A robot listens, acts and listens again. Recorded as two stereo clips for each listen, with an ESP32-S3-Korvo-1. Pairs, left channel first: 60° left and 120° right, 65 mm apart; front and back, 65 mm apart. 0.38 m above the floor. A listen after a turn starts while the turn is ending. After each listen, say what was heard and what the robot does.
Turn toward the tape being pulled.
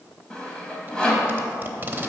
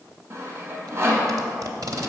The tape being pulled: straight behind. Turn 180° left.
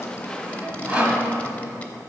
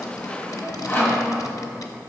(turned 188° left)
Keep listening.
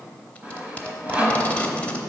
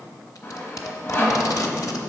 Found it: tape being pulled, straight ahead, under 1 m away.